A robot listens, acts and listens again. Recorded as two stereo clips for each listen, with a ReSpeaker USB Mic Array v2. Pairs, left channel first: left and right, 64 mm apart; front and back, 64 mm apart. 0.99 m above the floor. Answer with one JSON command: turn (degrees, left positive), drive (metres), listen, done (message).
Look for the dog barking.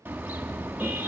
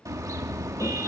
{"listen": true}
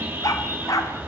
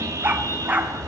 {"turn": 120}
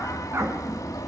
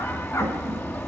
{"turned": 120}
{"listen": true}
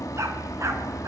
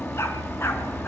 {"listen": true}
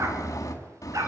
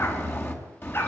{"turn": -55}
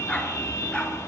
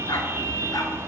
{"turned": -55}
{"listen": true}
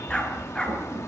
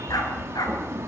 {"turn": 15}
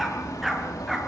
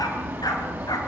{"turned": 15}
{"done": "Facing the dog barking, over 4 m away."}